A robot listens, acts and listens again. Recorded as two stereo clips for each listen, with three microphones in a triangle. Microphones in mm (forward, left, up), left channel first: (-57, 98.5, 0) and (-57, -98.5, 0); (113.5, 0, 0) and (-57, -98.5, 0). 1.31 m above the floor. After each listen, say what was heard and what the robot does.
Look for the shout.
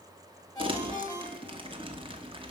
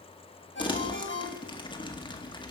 Keep listening.
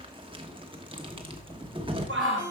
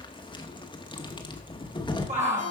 The shout: 95° right. Turn 95° right.
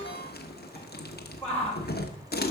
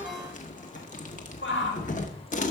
The shout is now 10° left. Turn 10° left.
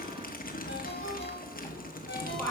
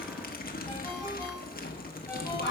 Facing the shout.